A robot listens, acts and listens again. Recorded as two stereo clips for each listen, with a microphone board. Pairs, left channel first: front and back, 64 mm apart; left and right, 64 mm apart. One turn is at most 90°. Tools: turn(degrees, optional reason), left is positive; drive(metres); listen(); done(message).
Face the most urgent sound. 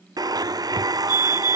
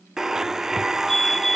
done("Found it: a fire alarm, straight ahead.")